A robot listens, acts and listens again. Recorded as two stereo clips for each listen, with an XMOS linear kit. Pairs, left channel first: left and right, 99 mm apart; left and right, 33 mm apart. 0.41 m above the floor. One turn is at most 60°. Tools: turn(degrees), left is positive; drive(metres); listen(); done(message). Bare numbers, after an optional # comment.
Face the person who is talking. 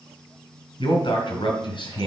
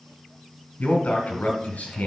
# The man speaking: about 60° left or 120° left.
turn(60)
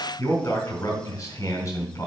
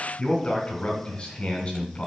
# So it is at 35° left.
turn(35)
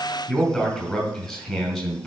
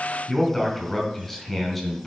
done("Found it: a man speaking, straight ahead.")